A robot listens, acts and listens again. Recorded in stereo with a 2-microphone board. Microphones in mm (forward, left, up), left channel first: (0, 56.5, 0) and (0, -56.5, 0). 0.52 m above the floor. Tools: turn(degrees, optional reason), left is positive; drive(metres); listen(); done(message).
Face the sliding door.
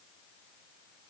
listen()
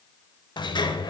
turn(degrees=45, reason="The sliding door: about 45° left or 135° left.")
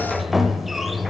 done("Found it: a sliding door, straight ahead, under 1 m away.")